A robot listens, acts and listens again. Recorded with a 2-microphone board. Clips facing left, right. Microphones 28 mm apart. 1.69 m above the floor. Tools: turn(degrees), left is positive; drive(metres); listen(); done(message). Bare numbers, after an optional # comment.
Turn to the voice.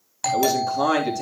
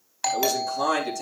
# The man speaking: about 20° left or 160° left.
turn(20)
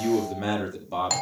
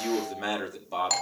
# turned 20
done("Found it: a man speaking, straight ahead, 2 to 4 m away.")